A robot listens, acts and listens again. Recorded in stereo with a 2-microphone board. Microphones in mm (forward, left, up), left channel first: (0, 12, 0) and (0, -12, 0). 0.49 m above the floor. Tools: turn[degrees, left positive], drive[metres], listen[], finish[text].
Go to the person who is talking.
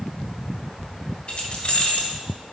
Action: listen[]
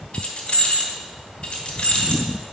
Action: listen[]
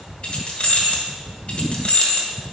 Action: finish[I can't make out anyone speaking, only keys jangling.]